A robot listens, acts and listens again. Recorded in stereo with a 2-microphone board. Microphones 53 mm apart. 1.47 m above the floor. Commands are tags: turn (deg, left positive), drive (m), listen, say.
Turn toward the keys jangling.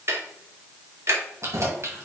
<turn deg="-60"/>
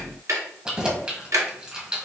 <turn deg="-20"/>
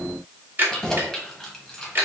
<turn deg="10"/>
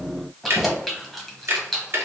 <say>Facing the keys jangling.</say>